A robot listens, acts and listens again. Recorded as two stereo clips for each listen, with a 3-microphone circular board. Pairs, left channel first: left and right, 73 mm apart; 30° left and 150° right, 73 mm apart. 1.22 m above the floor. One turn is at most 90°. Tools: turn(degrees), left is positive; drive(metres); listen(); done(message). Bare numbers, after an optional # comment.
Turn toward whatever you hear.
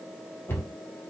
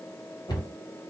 # The cupboard door: 30° left.
turn(30)
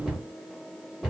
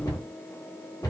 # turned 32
done("Found it: a cupboard door, straight ahead.")